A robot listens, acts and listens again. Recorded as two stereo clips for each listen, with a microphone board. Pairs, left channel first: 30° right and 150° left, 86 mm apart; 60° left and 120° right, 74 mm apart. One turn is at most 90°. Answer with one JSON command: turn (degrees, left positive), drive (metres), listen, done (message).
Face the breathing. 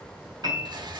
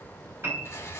{"listen": true}
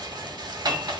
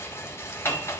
{"listen": true}
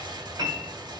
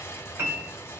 {"done": "I can't make out breathing to turn to."}